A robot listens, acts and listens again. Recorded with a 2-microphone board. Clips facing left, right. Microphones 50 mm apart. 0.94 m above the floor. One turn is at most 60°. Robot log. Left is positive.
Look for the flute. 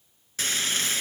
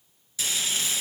cmd idle
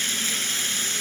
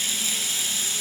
cmd idle
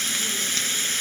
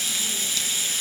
end: I can't make out a flute, only frying.